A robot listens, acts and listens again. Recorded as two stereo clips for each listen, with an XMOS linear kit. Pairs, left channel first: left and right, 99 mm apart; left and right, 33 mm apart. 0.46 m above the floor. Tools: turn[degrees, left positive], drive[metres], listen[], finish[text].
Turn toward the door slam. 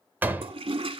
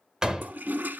Thought: The door slam: about 20° right or 160° right.
Action: turn[-20]
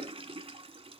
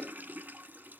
Action: listen[]
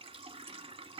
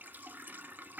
Action: finish[I heard a door slam, but can't make it out now. It was about straight ahead or 140° right.]